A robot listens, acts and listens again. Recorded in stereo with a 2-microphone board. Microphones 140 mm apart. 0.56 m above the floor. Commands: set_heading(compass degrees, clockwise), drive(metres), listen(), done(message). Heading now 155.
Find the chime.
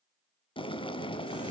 listen()
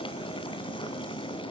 listen()
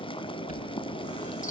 set_heading(80)
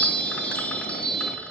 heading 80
set_heading(70)
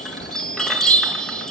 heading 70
done("Facing the chime, over 4 m away.")